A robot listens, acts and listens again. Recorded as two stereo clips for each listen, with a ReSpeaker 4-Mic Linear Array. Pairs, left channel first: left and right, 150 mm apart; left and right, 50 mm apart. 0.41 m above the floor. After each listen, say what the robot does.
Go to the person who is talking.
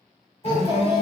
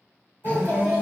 Turn 45° left.
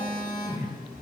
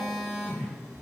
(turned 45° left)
Keep listening.
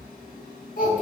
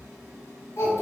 Turn 90° left.
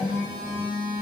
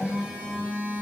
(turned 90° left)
Keep listening.
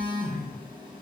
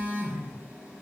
Keep listening.
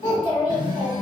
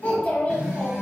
Turn 30° left.
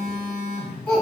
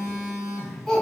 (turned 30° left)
Drive 1.0 m forward.
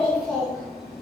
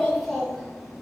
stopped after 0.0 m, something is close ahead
Blocked. The child speaking is further on, straight ahead.